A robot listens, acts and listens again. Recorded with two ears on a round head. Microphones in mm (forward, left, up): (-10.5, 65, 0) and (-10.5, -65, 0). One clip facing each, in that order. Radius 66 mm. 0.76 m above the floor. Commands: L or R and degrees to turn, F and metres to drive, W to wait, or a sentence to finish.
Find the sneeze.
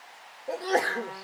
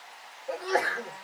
L35
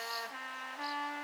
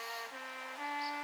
W
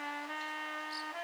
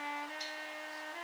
I heard a sneeze, but can't make it out now. It was about straight ahead or 110° left.